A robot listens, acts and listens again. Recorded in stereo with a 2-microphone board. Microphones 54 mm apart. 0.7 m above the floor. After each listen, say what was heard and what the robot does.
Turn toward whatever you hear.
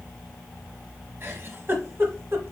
The giggle: about 45° right or 135° right. Turn 45° right.
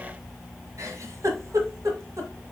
So it is at 90° right. Turn 90° right.
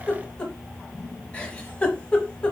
The giggle is now 20° left. Turn 20° left.
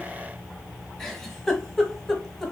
Facing the giggle.